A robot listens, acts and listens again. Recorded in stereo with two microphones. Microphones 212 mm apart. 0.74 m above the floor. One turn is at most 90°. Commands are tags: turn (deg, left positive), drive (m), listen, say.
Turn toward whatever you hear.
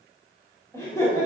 <turn deg="15"/>
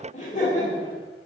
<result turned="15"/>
<turn deg="35"/>
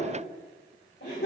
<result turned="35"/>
<turn deg="90"/>
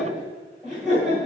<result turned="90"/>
<say>Found it: laughter, straight ahead.</say>